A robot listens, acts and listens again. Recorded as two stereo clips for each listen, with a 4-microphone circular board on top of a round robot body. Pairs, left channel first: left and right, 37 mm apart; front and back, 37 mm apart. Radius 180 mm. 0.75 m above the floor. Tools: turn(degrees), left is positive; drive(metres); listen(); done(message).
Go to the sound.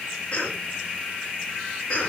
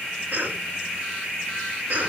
turn(degrees=155)
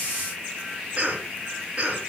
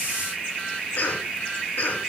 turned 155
turn(degrees=-25)
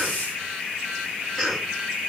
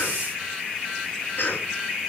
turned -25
turn(degrees=10)
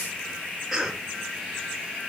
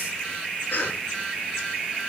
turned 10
drive(metres=1.0)
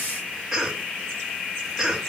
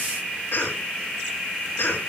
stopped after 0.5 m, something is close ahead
done("Something is in my way. I am facing the cough but have not reached it.")